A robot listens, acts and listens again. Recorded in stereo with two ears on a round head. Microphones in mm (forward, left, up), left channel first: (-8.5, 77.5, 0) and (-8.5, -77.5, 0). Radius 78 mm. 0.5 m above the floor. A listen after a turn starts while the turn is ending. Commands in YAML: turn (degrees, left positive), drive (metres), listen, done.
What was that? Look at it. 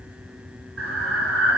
turn: -90
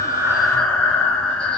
done: "Found it: breathing, straight ahead, 2 to 4 m away."